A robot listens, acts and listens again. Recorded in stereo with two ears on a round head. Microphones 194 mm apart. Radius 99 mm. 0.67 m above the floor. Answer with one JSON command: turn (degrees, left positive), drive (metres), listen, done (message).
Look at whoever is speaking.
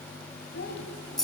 {"turn": 50}
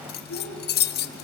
{"turn": 85}
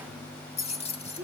{"turn": 15}
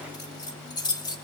{"listen": true}
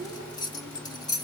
{"turn": 10}
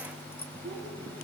{"done": "Facing the child speaking, over 4 m away."}